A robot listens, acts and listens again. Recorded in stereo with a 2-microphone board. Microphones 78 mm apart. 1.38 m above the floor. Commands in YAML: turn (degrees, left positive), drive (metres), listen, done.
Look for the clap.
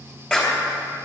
turn: 30
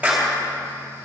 turn: -20
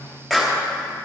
done: "Facing the clap, 2 to 4 m away."